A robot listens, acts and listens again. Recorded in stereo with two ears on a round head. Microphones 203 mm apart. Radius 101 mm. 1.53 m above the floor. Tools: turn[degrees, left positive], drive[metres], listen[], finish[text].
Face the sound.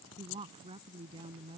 Thought: The woman speaking: about 25° right or 155° right.
Action: turn[-25]
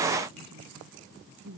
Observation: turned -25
Thought: So it is at 130° right.
Action: turn[-130]
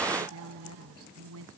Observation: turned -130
Thought: The woman speaking is now 70° right.
Action: turn[-70]
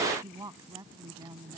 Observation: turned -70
Thought: The woman speaking is now 15° right.
Action: turn[-15]
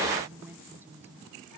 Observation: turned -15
Thought: The woman speaking is now 10° right.
Action: turn[-10]
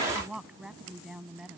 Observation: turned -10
Action: finish[Facing the woman speaking.]